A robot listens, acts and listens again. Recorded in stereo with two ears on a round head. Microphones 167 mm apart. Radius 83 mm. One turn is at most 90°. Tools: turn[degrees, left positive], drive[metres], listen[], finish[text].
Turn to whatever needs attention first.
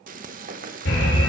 Thought: The alarm: about 60° left or 120° left.
Action: turn[60]
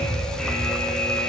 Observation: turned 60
Action: finish[Found it: an alarm, straight ahead.]